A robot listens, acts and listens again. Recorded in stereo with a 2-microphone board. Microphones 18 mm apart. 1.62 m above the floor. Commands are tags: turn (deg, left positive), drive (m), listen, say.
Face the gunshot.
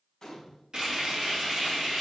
<turn deg="25"/>
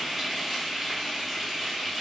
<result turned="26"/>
<listen/>
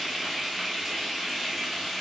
<say>I heard a gunshot, but can't make it out now. It was about straight ahead or 130° left.</say>